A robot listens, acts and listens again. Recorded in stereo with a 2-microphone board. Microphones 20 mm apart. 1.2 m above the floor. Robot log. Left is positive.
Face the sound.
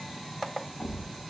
note: The thud: about 50° left or 130° left.
cmd yaw +50
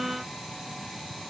cmd idle
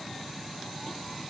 end: I heard a thud, but can't make it out now. It was about straight ahead or 80° left.